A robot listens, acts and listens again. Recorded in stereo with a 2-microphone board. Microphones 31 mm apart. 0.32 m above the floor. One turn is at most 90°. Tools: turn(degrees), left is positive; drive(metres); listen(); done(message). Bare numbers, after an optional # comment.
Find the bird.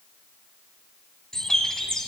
# The bird: about 20° left or 160° left.
turn(20)
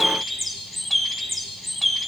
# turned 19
done("Found it: a bird, straight ahead.")